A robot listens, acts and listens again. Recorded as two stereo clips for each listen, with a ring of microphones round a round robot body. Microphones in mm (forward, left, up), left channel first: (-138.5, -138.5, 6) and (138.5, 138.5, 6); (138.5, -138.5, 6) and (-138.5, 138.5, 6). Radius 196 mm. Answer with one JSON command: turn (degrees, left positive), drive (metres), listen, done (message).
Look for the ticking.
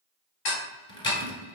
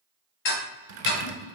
{"turn": -105}
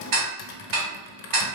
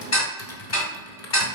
{"done": "Found it: ticking, straight ahead, 1 to 2 m away."}